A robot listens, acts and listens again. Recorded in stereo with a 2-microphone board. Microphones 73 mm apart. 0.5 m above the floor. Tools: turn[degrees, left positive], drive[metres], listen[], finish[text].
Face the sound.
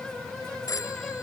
Thought: The phone ringing: about 55° left or 125° left.
Action: turn[55]
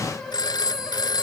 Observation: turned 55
Thought: So it is at 75° left.
Action: turn[75]
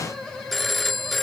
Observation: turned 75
Action: finish[Found it: a phone ringing, straight ahead.]